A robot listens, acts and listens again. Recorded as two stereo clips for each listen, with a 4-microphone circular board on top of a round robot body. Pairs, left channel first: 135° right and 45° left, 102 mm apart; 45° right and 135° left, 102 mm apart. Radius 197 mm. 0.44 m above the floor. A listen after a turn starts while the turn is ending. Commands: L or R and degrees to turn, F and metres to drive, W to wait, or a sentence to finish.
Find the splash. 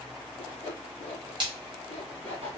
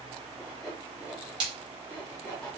L90
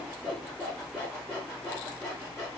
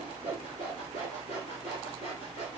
I heard a splash from this way, but can't make it out now.